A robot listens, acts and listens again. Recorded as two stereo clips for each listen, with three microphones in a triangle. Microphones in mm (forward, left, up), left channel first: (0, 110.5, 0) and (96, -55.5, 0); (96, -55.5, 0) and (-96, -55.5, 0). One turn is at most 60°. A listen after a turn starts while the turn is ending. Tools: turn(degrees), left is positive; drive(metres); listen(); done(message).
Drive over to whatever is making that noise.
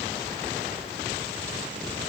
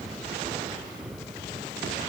listen()
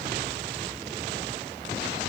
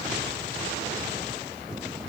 listen()
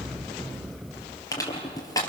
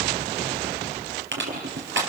turn(degrees=-60)
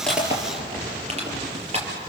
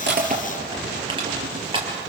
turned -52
turn(degrees=-60)
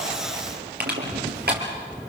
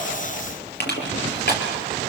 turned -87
turn(degrees=-30)
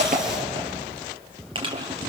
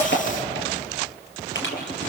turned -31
drive(metres=1.0)
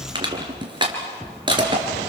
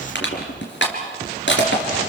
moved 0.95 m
drive(metres=1.0)
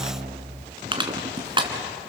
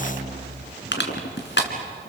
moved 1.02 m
drive(metres=1.0)
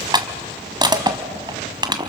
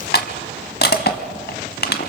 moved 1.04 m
drive(metres=1.0)
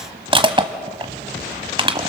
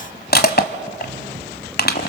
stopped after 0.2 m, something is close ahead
done("I am next to the crushing.")